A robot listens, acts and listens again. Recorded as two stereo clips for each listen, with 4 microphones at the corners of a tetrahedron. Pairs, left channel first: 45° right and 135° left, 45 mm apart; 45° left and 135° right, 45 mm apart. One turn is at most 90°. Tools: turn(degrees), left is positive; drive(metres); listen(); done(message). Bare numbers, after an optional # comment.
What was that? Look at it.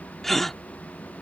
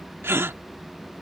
# The gasp: 130° right.
turn(-90)
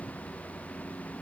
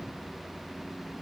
# Nothing new. It was at 40° right.
turn(-40)
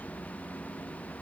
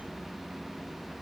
done("Facing where the gasp came from. I can't hear it now.")